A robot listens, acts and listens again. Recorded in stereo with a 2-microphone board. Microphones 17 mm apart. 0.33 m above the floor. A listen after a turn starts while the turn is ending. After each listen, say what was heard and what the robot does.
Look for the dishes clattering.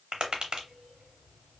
Keep listening.
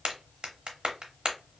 Keep listening.
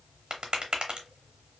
I can't make out dishes clattering, only tapping.